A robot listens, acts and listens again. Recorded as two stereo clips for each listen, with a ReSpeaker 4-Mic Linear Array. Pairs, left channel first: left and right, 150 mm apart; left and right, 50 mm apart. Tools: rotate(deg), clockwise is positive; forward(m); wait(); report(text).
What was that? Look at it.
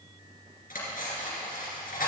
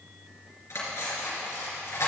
rotate(-70)
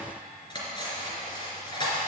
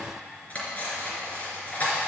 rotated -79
rotate(-30)
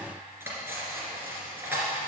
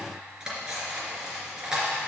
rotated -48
rotate(15)
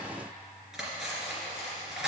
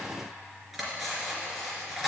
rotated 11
report("Found it: cutlery clinking, straight ahead.")